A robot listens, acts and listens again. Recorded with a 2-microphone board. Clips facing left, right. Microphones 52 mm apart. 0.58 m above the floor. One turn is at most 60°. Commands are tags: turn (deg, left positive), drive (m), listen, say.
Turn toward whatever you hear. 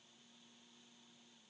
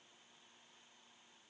<listen/>
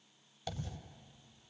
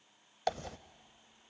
<turn deg="-60"/>
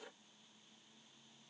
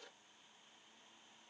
<listen/>
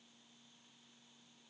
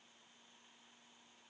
<say>I heard a dropped coin, but can't make it out now. It was about 15° right or 45° right.</say>